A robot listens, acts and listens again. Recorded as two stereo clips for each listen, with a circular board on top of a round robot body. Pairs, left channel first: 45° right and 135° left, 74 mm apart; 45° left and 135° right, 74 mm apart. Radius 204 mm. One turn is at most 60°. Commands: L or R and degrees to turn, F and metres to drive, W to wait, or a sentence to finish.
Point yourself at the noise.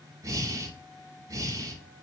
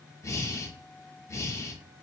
L60
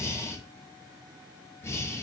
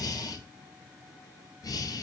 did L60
L10
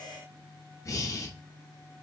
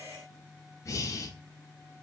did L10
Found it: breathing, straight ahead, under 1 m away.